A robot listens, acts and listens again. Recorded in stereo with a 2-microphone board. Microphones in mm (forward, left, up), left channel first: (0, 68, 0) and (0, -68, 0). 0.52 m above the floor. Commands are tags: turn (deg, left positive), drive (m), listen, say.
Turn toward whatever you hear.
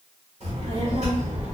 <turn deg="-55"/>
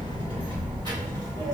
<turn deg="-30"/>
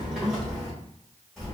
<say>Found it: a child speaking, straight ahead, 2 to 4 m away.</say>